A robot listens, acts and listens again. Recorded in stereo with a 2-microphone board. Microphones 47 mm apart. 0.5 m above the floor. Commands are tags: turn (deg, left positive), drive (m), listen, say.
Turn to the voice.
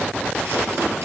<listen/>
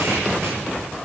<listen/>
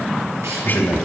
<turn deg="50"/>
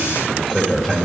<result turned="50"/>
<turn deg="10"/>
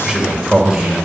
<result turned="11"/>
<say>Facing the man speaking, 2 to 4 m away.</say>